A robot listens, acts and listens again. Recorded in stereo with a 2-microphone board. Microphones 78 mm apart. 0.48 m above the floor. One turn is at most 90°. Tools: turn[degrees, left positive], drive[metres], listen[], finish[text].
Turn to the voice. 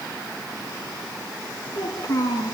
Thought: The child speaking: about 55° left or 125° left.
Action: turn[55]
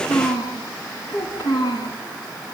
Thought: So it is at 65° left.
Action: turn[65]
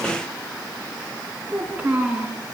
Thought: The child speaking is now 15° right.
Action: turn[-15]
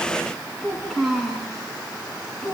Action: finish[Found it: a child speaking, straight ahead.]